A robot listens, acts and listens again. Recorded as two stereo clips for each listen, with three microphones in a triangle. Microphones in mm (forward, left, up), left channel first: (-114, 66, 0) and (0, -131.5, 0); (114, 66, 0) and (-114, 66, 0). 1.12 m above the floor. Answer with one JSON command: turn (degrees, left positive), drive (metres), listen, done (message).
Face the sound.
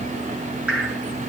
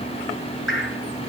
{"turn": 25}
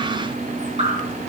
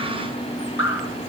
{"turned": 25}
{"done": "Found it: dripping, straight ahead, over 4 m away."}